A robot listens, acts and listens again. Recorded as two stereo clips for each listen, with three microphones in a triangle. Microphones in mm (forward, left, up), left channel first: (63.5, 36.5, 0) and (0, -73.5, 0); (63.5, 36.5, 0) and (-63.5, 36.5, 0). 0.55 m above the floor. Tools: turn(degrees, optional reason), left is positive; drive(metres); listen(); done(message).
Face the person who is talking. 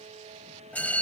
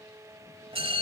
listen()
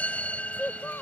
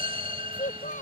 turn(degrees=-15, reason="The child speaking: 15° right.")
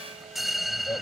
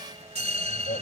listen()
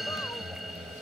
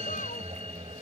listen()
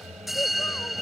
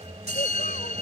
done("I heard a child speaking from this way, but can't make it out now.")